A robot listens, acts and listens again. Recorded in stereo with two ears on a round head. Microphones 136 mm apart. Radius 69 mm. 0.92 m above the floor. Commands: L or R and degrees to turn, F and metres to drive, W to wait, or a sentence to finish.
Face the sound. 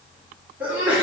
R30
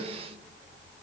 W
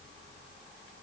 I heard a sneeze, but can't make it out now. It was about 20° left or 140° right.